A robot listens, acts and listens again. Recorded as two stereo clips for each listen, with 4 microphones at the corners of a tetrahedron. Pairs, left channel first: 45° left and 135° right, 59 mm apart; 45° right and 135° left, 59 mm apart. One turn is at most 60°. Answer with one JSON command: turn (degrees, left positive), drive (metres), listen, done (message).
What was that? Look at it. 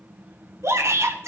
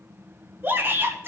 {"turn": -60}
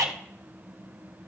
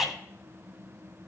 {"turn": -60}
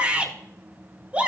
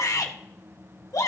{"turn": -60}
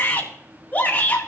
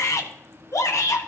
{"turn": -15}
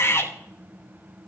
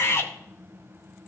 {"done": "Facing the shout."}